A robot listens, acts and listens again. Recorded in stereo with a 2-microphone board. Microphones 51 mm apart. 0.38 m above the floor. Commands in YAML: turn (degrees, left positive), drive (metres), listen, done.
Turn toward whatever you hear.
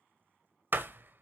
turn: -45
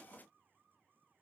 listen: true
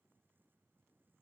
done: "I heard a door slam, but can't make it out now. It was about straight ahead or 90° right."